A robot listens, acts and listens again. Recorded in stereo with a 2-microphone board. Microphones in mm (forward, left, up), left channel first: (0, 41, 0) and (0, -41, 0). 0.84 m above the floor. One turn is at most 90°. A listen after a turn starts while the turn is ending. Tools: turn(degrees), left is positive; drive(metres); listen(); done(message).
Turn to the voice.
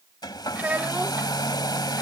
turn(degrees=-20)
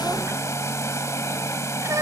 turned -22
turn(degrees=-90)
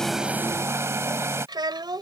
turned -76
turn(degrees=-60)
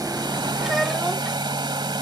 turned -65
listen()
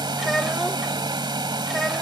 listen()
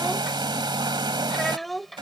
done("Found it: a child speaking, straight ahead.")